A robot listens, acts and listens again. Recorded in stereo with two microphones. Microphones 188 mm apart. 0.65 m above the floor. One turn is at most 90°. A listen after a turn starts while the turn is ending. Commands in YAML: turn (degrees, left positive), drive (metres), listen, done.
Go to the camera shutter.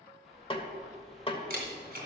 turn: -55
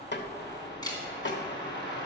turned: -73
turn: 20
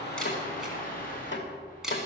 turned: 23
drive: 1.0
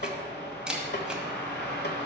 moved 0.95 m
drive: 1.0
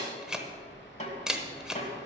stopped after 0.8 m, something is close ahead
done: "I am next to the camera shutter."